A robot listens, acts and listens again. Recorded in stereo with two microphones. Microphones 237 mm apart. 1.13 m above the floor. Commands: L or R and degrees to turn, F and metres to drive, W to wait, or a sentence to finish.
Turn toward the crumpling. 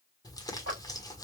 L30
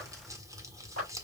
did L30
R15
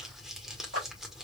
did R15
Facing the crumpling, 1 to 2 m away.